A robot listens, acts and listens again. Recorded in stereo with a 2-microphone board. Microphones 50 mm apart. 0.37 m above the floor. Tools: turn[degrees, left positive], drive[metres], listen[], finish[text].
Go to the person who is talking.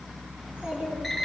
Thought: The child speaking: about 35° right or 145° right.
Action: turn[-35]
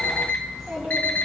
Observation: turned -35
Action: drive[1.0]
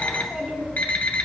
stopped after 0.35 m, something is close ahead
Action: finish[Blocked. The child speaking is further on, straight ahead.]